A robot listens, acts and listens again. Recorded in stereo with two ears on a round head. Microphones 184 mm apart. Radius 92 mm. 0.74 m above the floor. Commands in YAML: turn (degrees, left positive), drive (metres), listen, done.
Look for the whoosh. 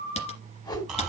turn: 20
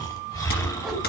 done: "Facing the whoosh, 2 to 4 m away."